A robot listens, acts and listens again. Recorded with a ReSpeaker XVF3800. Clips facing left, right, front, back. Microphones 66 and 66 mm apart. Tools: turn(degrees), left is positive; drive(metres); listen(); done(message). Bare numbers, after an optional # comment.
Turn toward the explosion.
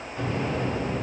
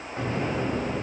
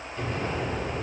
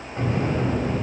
# The explosion: 140° right.
turn(-140)
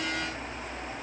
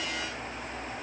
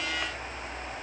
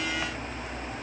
done("Facing where the explosion came from. I can't hear it now.")